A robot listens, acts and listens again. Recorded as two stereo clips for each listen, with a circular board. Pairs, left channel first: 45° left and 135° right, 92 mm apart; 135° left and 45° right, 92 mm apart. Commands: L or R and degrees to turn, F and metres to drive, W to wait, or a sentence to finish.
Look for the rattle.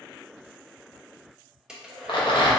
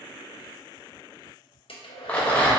L65
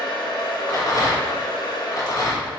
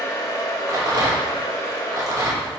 Found it: a rattle, straight ahead, under 1 m away.